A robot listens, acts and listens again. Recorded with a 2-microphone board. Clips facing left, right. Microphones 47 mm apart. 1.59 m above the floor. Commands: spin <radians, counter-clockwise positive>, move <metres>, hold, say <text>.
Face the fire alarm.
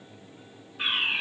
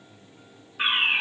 spin -0.52
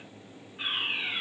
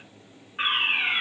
spin -2.09
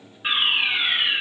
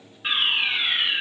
spin 0.17
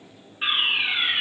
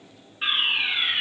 say Facing the fire alarm.